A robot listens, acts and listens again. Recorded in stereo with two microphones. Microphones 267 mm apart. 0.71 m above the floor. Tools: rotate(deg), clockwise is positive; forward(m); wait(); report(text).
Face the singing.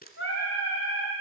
rotate(-50)
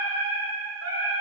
rotate(-75)
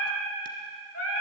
rotate(-50)
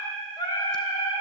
rotate(-20)
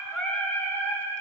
rotate(-10)
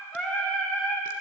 report("Facing the singing.")